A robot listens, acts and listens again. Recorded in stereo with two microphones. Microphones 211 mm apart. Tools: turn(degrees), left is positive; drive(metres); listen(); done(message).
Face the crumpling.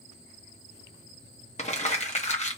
turn(degrees=30)
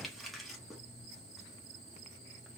done("Found it: crumpling, straight ahead.")